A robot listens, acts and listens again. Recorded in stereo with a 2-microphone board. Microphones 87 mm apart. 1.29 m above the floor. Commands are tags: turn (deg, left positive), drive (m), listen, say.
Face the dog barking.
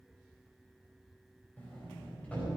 <listen/>
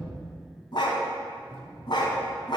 <turn deg="55"/>
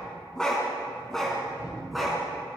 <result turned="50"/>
<say>Facing the dog barking.</say>